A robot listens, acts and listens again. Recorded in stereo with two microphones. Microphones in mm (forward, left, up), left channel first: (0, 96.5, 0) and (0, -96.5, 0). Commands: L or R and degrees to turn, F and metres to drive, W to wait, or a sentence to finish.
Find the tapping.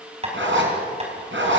R35
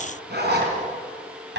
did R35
R110
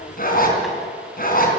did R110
W
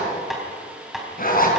Found it: tapping, straight ahead, over 4 m away.